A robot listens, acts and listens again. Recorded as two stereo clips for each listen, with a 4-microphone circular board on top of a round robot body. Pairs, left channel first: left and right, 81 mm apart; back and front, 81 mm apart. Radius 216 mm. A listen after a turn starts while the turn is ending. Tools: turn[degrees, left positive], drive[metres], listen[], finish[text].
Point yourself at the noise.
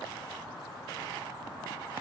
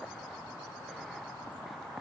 Action: listen[]
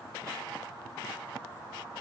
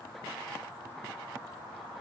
Action: listen[]
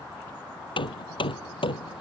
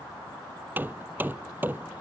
Thought: The hammering: 70° left.
Action: turn[70]
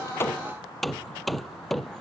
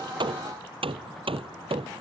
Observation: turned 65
Action: finish[Found it: hammering, straight ahead.]